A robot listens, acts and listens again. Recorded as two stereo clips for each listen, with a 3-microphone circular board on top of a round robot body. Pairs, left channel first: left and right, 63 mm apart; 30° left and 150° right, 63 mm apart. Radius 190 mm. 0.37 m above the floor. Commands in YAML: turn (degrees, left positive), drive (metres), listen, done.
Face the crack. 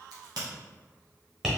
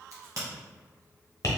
turn: -110
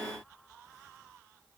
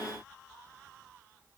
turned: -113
done: "I heard a crack from this way, but can't make it out now."